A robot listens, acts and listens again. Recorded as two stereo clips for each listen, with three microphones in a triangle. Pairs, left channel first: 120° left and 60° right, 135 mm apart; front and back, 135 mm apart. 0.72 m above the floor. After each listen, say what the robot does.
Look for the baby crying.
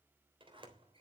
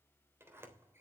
Keep listening.
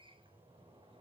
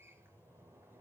Keep listening.
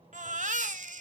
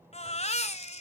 Turn 40° right.
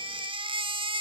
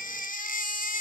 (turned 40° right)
Turn 10° right.
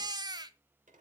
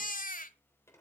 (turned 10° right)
Facing the baby crying.